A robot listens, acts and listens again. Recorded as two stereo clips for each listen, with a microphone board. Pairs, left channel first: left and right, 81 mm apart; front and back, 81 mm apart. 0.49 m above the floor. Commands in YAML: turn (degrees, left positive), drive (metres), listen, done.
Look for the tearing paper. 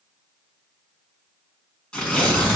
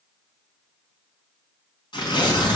turn: 15
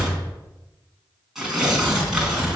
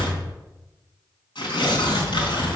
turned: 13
done: "Facing the tearing paper."